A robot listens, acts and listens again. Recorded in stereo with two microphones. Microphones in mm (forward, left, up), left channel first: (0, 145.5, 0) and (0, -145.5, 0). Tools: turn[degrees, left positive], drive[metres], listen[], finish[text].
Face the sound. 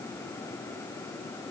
Action: listen[]
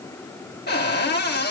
Thought: The cupboard door: about 35° left or 145° left.
Action: turn[35]
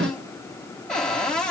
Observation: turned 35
Action: finish[Facing the cupboard door.]